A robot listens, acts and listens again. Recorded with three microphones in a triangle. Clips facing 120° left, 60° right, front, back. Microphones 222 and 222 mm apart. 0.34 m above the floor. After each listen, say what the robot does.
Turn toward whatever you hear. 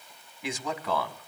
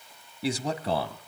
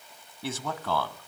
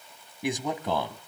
Turn 115° right.
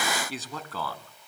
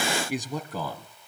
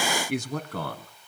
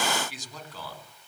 Turn 10° left.
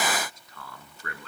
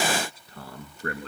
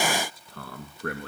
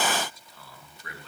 Turn 10° right.
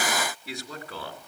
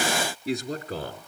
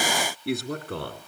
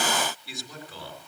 Turn 10° right.
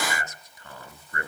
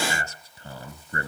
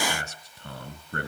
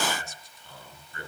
Facing the man speaking, 2 to 4 m away.